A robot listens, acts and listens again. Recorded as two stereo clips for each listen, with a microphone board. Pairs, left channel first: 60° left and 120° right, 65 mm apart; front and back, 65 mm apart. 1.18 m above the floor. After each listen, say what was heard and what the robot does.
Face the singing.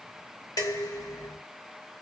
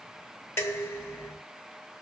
Keep listening.
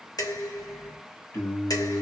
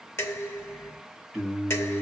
The singing: 90° left. Turn 90° left.
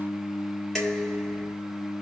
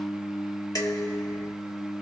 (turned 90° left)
The singing is now 20° left. Turn 20° left.
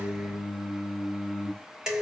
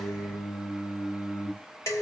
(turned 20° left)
Found it: singing, straight ahead, 1 to 2 m away.